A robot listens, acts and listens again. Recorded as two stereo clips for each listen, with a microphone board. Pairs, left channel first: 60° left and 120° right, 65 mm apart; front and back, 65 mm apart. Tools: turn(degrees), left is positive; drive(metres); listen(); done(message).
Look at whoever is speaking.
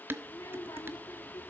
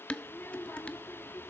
turn(degrees=60)
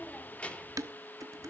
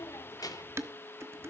turn(degrees=-10)
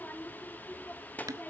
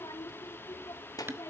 done("Found it: a child speaking, straight ahead.")